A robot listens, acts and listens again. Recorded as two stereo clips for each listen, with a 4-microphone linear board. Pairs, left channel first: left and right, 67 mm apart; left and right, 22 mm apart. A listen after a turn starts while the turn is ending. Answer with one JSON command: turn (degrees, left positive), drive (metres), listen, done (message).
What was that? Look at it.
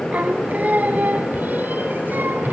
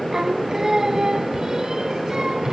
{"turn": -30}
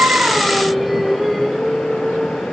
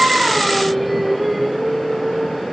{"done": "Facing the singing."}